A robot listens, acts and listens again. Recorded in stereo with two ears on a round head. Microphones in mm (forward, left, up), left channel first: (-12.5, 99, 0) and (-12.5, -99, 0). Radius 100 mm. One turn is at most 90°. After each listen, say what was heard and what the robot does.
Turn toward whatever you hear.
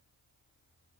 Keep listening.
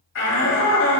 The shout: about 70° left or 110° left. Turn 70° left.
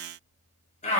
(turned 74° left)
So it is at 35° left. Turn 35° left.
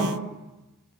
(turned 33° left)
Found it: a shout, straight ahead.